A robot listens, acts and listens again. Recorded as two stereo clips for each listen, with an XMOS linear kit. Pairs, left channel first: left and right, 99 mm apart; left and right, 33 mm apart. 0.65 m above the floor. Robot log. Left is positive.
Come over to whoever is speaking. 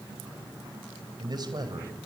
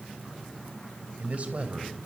note: The man speaking: about 45° right or 135° right.
cmd yaw -45
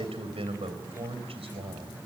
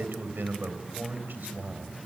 note: So it is at 90° right.
cmd yaw -90
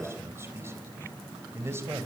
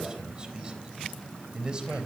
note: The man speaking is now 30° right.
cmd yaw -30
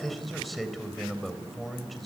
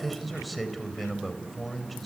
cmd fwd 1.0
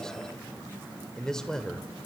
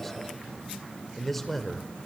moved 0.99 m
cmd fwd 1.0
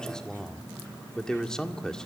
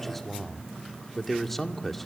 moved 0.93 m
note: The man speaking is now 10° left.
cmd yaw +10
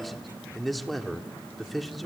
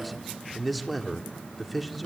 cmd fwd 1.0
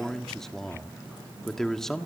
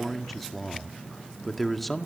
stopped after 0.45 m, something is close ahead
end: I am next to the man speaking.